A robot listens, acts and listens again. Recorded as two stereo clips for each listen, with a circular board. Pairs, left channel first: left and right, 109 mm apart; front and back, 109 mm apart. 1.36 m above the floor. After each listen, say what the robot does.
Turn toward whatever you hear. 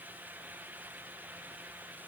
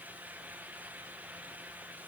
Keep listening.
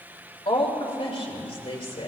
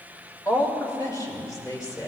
Turn 60° left.
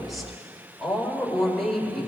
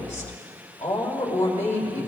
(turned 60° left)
Found it: a woman speaking, straight ahead.